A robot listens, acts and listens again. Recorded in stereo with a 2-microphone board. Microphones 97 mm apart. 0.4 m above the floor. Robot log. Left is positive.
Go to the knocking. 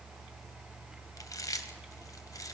cmd idle
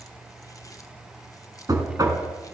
note: The knocking: about 40° right or 140° right.
cmd yaw -40
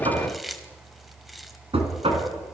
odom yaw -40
note: So it is at 100° right.
cmd yaw -100
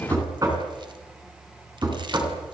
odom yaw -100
note: The knocking is now 40° right.
cmd yaw -40
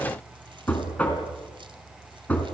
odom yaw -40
note: The knocking is now 15° left.
cmd yaw +15
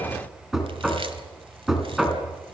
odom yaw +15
cmd fwd 1.0
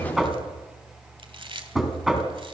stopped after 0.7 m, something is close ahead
end: Something is in my way. I am facing the knocking but have not reached it.